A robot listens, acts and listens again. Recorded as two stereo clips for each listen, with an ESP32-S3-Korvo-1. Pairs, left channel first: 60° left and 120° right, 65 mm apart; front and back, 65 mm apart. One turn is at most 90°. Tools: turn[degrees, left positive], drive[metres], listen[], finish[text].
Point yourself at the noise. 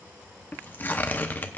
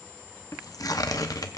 Action: finish[Facing the tearing paper.]